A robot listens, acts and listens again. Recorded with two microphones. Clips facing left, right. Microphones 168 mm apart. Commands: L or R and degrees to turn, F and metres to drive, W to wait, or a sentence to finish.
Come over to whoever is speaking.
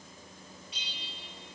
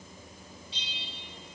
W
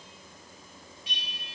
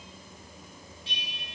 W
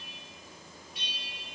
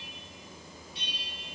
I can't make out anyone speaking to turn to.